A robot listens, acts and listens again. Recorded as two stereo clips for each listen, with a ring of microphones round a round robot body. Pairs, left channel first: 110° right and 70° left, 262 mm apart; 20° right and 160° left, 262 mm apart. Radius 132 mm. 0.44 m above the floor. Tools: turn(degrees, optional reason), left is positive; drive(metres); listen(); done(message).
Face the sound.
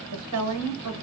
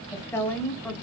turn(degrees=65, reason="The woman speaking: 65° left.")
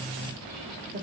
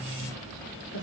turn(degrees=15, reason="The woman speaking is now 15° left.")
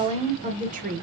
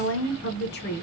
turn(degrees=25, reason="The woman speaking is now 25° left.")
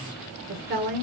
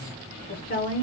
turn(degrees=35, reason="The woman speaking is now 35° left.")
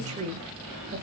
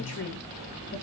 turn(degrees=10, reason="The woman speaking is now 10° left.")
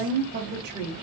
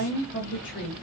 turn(degrees=25, reason="The woman speaking is now 25° left.")
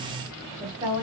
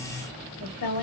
done("Found it: a woman speaking, straight ahead.")